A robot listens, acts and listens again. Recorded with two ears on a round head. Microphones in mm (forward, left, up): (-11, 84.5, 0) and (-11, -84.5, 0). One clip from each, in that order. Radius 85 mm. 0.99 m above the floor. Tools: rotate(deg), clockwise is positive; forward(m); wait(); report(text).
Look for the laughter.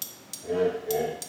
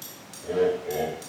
rotate(35)
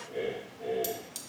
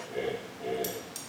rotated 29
rotate(125)
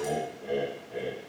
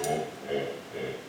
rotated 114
rotate(25)
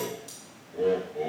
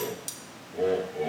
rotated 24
rotate(15)
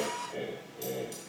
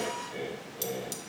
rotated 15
rotate(10)
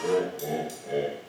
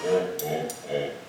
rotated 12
report("Facing the laughter, 2 to 4 m away.")